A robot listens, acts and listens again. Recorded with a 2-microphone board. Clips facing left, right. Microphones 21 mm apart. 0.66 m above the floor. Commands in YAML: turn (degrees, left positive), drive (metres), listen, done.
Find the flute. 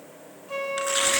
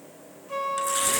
turn: 30
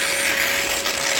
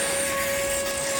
listen: true
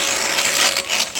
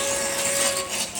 listen: true
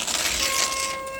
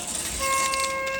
done: "I heard a flute, but can't make it out now. It was about 20° right or 140° left."